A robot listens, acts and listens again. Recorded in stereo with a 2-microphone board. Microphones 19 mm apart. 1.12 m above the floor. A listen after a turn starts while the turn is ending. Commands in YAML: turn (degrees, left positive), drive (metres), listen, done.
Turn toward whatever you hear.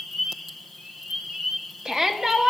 turn: -35
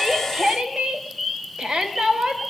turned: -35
turn: -110
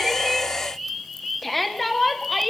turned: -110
done: "Facing the shout."